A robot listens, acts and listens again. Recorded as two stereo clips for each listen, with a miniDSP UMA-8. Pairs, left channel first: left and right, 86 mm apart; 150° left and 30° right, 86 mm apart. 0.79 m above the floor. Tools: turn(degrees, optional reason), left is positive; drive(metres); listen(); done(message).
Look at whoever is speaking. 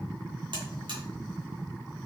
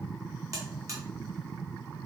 listen()
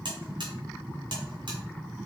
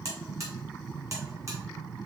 listen()
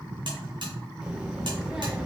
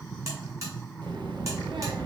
turn(degrees=-10, reason="The child speaking: 10° right.")
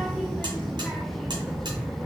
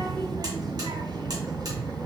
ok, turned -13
done("Facing the child speaking.")